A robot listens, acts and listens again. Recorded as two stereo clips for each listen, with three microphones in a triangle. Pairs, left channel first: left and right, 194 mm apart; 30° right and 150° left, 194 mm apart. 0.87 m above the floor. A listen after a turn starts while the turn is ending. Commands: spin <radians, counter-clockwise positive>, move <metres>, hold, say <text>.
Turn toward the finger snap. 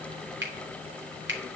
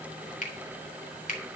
spin -1.40
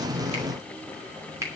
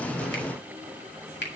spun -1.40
spin -0.26
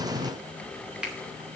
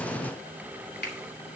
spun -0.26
say Found it: a finger snap, straight ahead.